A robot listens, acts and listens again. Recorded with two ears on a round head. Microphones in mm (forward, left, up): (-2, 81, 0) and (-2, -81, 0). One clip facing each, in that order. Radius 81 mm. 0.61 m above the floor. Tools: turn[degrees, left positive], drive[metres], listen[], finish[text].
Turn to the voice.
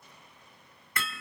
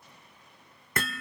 Action: listen[]
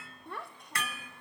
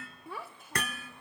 Action: turn[-30]
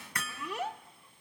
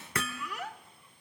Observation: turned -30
Thought: So it is at 25° left.
Action: turn[25]
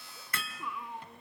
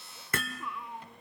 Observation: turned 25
Action: finish[Found it: a child speaking, straight ahead, under 1 m away.]